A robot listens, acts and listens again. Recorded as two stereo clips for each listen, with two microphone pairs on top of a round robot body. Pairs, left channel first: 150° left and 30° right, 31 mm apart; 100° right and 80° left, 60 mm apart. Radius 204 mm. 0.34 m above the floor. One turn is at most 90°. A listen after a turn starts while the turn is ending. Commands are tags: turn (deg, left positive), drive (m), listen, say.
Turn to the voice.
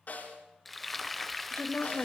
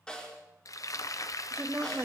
<turn deg="90"/>
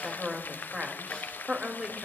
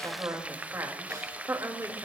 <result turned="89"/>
<turn deg="40"/>
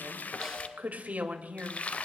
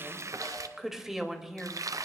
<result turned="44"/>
<say>Facing the woman speaking, 2 to 4 m away.</say>